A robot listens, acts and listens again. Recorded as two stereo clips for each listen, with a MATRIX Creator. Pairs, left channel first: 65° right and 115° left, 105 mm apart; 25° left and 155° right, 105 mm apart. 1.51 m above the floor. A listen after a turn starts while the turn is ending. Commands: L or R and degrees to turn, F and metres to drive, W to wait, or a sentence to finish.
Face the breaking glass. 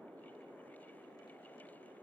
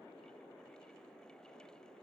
W
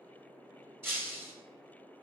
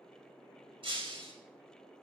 L180
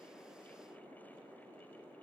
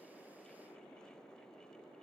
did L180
Facing where the breaking glass came from. I can't hear it now.